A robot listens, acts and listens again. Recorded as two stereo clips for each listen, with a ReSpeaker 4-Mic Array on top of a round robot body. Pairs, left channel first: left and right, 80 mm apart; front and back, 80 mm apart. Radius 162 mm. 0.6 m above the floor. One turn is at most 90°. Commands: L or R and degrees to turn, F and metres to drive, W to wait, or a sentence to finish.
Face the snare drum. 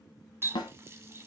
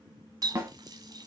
L90
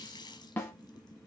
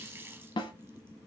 L20
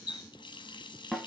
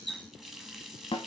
Found it: a snare drum, straight ahead, under 1 m away.